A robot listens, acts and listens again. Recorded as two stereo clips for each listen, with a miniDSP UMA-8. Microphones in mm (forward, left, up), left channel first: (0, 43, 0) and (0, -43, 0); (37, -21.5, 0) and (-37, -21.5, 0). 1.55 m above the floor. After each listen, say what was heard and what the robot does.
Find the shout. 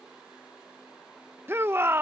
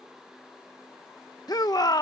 The shout: 30° right. Turn 30° right.
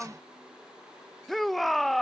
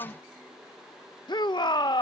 Found it: a shout, straight ahead.